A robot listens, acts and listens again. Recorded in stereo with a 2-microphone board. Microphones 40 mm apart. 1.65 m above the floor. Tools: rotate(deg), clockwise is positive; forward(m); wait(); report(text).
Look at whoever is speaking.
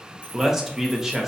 rotate(30)
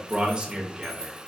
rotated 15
rotate(155)
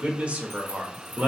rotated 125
rotate(30)
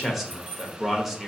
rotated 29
report("Found it: a man speaking, straight ahead, under 1 m away.")